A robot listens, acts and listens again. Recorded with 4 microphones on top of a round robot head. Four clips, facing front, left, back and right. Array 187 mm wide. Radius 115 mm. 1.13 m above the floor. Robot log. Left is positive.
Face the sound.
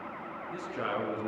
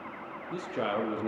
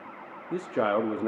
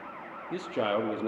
note: The man speaking: 165° right.
cmd yaw -165
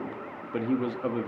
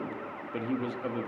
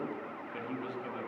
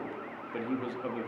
end: Facing the man speaking, 2 to 4 m away.